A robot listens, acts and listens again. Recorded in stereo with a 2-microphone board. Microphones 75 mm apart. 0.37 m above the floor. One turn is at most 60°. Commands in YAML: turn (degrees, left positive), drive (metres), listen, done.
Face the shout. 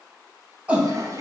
turn: -20
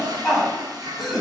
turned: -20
done: "Found it: a shout, straight ahead, 2 to 4 m away."